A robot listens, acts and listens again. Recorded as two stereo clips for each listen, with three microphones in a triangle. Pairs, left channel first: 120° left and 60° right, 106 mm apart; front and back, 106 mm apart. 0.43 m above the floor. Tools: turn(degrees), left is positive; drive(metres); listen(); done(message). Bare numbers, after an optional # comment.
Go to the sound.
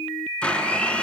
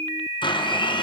# The blender: 40° left.
turn(40)
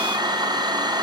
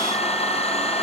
# The blender is now 15° right.
turn(-15)
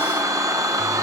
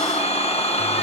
drive(1.0)
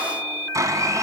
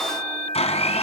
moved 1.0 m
drive(1.0)
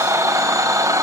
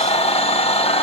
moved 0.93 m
drive(1.0)
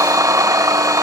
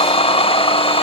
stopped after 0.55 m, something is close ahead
done("Arrived at the blender, straight ahead.")